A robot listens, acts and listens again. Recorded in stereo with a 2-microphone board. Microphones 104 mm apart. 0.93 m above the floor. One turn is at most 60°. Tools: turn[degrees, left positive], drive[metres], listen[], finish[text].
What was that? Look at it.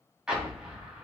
Action: turn[-30]
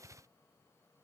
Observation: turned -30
Action: listen[]
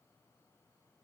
Action: finish[I heard an explosion, but can't make it out now. It was about 20° left or 140° right.]